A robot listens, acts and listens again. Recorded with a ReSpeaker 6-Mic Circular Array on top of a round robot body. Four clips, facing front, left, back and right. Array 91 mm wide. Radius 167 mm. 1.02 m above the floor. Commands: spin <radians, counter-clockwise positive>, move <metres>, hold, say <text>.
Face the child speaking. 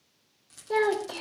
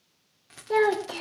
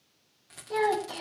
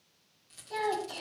spin 1.13
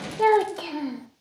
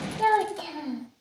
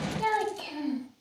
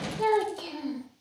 say Found it: a child speaking, straight ahead.